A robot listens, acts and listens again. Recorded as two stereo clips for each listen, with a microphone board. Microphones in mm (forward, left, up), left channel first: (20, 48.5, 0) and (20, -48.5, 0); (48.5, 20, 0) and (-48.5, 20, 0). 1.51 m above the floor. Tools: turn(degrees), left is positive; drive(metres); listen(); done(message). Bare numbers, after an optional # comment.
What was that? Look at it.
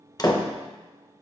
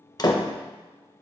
# The door slam: 45° left.
turn(45)
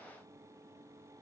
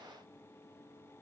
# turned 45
done("I heard a door slam from this way, but can't make it out now.")